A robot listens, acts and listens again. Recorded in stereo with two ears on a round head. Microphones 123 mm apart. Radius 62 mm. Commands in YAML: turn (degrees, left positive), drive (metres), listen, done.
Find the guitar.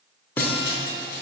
turn: 30
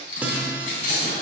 turn: -15
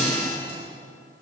done: "Found it: a guitar, straight ahead."